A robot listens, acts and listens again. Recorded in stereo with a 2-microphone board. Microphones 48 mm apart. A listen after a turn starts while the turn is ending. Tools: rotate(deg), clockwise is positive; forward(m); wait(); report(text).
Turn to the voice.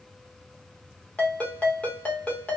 wait()
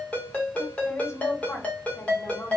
rotate(-65)
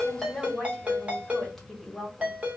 report("Facing the woman speaking.")